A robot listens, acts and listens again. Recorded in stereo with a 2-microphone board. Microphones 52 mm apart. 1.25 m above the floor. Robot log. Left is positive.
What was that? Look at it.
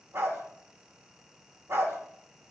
note: The dog barking: about 55° right or 125° right.
cmd yaw -55
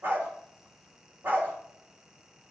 note: So it is at 50° right.
cmd yaw -50
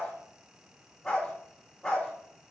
note: The dog barking is now 15° left.
cmd yaw +15
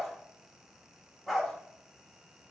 end: Facing the dog barking, 1 to 2 m away.